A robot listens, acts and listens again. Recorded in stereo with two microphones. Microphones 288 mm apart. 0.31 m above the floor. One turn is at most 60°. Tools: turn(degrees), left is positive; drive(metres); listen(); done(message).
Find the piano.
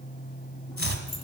listen()
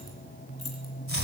listen()
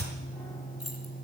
done("I can't make out a piano to turn to.")